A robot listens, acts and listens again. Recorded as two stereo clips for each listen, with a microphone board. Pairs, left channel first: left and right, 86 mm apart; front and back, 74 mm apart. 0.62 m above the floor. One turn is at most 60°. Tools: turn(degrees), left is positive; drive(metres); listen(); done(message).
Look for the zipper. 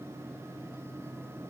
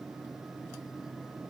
listen()
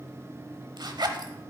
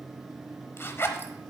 turn(degrees=-60)
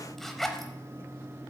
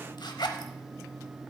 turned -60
done("Facing the zipper, under 1 m away.")